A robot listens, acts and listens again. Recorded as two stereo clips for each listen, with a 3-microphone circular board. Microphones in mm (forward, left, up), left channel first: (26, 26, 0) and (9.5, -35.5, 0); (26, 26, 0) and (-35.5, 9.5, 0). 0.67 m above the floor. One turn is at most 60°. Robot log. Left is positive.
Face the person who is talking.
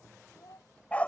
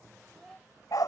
note: The child speaking: 105° left.
cmd yaw +60
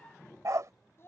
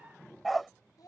note: The child speaking is now 25° left.
cmd yaw +25
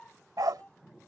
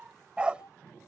end: Found it: a child speaking, straight ahead.